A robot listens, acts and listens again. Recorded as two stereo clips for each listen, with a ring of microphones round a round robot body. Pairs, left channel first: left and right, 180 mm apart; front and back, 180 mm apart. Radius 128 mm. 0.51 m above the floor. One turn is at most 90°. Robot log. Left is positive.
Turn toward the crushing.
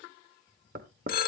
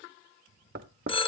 cmd idle
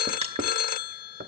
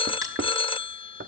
note: The crushing: 35° right.
cmd yaw -35
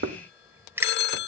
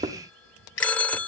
note: The crushing is now 15° right.
cmd yaw -15
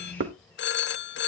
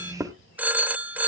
cmd idle
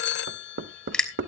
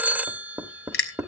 end: Facing the crushing.